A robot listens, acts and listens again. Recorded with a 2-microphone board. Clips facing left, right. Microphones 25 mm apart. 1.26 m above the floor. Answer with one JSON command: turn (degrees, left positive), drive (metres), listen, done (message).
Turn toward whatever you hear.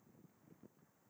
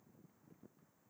{"listen": true}
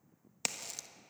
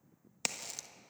{"turn": -30}
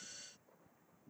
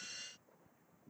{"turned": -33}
{"listen": true}
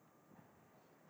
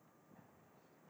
{"done": "I heard a crack, but can't make it out now. It was about 30° left or 140° right."}